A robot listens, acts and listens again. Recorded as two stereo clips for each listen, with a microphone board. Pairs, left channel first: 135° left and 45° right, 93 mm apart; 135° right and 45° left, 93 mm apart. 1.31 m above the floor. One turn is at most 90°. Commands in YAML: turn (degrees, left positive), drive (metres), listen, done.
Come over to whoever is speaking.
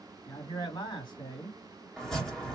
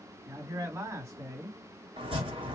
turn: 90
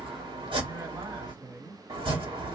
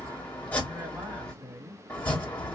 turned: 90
turn: -10
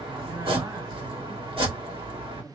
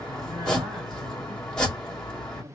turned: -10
drive: 1.0
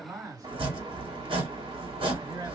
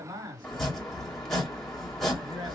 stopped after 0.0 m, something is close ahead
done: "Something is in my way. I am facing the man speaking but have not reached it."